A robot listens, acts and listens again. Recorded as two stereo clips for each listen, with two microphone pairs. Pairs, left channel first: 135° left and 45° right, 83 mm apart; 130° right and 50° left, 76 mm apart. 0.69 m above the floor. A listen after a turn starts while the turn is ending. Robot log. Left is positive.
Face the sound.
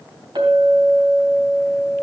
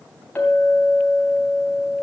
note: The clink: 60° right.
cmd yaw -60
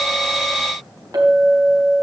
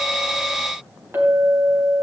end: Found it: a clink, straight ahead.